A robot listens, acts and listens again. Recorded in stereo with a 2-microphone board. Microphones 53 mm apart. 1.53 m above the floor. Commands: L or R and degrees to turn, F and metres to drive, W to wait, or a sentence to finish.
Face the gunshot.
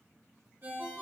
W
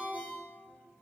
W
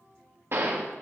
R50
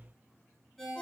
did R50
W
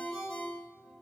I heard a gunshot, but can't make it out now. It was about straight ahead or 80° right.